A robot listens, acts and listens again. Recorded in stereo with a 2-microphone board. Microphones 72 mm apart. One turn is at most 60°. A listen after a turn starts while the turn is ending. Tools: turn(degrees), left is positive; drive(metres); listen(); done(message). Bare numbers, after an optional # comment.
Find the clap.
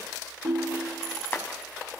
# The clap: about 30° left or 150° left.
turn(30)
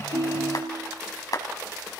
# So it is at 120° left.
turn(60)
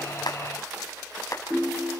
# The clap is now 45° left.
turn(45)
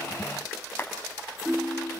# The clap is now 30° left.
turn(30)
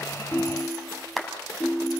done("Found it: a clap, straight ahead, 2 to 4 m away.")